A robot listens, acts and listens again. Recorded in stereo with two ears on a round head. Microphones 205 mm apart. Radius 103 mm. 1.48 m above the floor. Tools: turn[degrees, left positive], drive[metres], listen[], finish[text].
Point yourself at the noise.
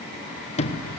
Thought: The sliding door: about 30° left or 150° left.
Action: turn[30]
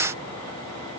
Action: listen[]
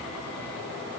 Action: listen[]
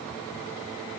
Action: finish[I heard a sliding door, but can't make it out now. It was about straight ahead or 120° left.]